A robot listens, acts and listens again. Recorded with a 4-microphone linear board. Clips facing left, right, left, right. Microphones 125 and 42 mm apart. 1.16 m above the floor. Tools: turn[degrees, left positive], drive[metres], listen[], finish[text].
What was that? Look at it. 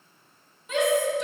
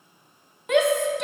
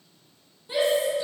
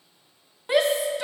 Thought: The shout: about 70° right or 110° right.
Action: turn[-70]
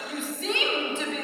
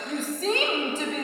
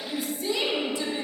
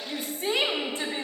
Thought: So it is at 40° right.
Action: turn[-40]
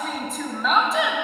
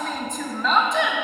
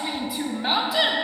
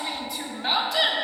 Action: finish[Found it: a shout, straight ahead, under 1 m away.]